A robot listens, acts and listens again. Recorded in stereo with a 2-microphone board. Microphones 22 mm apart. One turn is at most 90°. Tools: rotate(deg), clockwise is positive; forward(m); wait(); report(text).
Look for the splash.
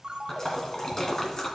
rotate(-30)
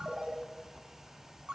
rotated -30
wait()
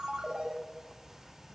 report("I heard a splash, but can't make it out now. It was about straight ahead or 120° left.")